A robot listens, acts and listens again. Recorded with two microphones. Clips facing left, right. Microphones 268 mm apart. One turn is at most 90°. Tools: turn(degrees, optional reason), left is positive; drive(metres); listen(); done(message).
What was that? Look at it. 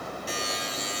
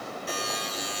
turn(degrees=-60, reason="The buzzer: about 60° right or 120° right.")
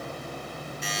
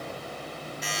done("Facing the buzzer.")